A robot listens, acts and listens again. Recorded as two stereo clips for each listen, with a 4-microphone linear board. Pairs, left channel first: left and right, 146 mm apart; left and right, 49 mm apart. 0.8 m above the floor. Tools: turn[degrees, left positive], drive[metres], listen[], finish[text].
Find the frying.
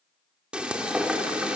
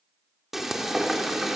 Action: turn[-30]
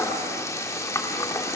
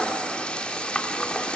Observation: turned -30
Thought: So it is at 20° left.
Action: turn[20]
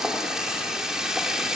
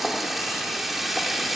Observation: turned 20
Action: finish[Found it: frying, straight ahead, 2 to 4 m away.]